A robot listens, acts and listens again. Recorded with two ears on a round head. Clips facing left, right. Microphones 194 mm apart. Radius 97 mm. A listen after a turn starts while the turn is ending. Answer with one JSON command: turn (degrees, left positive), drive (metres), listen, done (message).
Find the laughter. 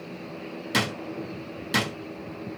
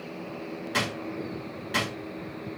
{"listen": true}
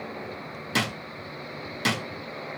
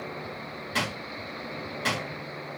{"listen": true}
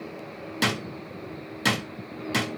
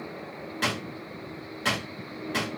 {"done": "I can't make out laughter, only a drawer."}